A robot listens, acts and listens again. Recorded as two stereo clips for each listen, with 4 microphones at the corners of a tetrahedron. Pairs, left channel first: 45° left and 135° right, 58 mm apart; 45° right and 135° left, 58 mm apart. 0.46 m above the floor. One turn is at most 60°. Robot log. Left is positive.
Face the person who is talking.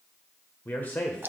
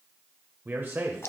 note: The man speaking: 95° left.
cmd yaw +60
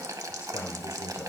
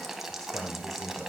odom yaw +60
note: The man speaking is now 40° left.
cmd yaw +40
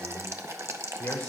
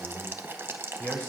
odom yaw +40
end: Facing the man speaking, 1 to 2 m away.